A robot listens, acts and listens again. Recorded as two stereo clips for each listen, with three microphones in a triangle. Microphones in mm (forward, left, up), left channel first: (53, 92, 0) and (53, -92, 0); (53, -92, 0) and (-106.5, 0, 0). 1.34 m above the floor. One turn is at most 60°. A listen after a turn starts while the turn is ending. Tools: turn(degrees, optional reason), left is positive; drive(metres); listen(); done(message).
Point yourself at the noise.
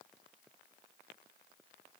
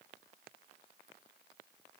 listen()
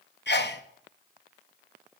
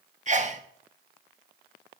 turn(degrees=60, reason="The sneeze: 105° left.")
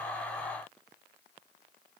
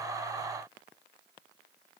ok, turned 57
turn(degrees=50, reason="Nothing new. It was at 50° left.")
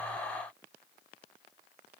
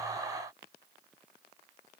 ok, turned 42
done("I heard a sneeze from this way, but can't make it out now.")